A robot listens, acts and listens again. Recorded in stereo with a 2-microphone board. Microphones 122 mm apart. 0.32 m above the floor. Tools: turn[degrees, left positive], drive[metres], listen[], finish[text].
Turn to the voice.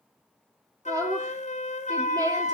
Thought: The woman speaking: about 30° right or 150° right.
Action: turn[-30]
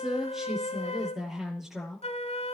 Action: finish[Facing the woman speaking, over 4 m away.]